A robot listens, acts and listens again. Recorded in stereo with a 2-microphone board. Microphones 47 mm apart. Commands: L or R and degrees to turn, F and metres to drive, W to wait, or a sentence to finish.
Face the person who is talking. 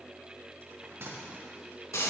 W
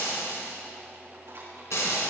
W
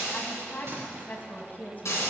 L40
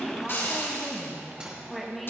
Found it: a woman speaking, straight ahead.